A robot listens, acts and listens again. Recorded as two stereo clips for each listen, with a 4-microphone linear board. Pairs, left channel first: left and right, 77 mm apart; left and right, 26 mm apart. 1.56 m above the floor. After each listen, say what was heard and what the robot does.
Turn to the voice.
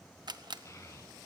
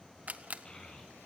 The child speaking: about 40° left or 140° left. Turn 40° left.
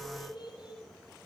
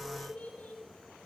So it is at 100° left. Turn 100° left.
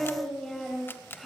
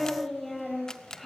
Found it: a child speaking, straight ahead, over 4 m away.